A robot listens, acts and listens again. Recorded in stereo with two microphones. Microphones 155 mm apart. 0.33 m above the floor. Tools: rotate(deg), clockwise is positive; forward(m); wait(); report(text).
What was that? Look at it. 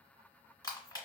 rotate(-25)
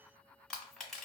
report("Found it: crushing, straight ahead, 1 to 2 m away.")